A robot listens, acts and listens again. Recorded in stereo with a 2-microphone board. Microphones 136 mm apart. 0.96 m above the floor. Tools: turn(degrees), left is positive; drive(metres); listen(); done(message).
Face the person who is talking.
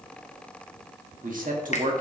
turn(degrees=-90)
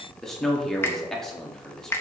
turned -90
done("Found it: a man speaking, straight ahead.")